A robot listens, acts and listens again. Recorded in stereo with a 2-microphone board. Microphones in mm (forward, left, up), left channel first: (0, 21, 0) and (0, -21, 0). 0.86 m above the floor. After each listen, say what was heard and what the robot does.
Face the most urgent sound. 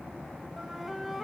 Keep listening.
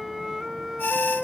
The alarm: about 70° left or 110° left. Turn 70° left.
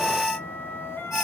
Found it: an alarm, straight ahead, 2 to 4 m away.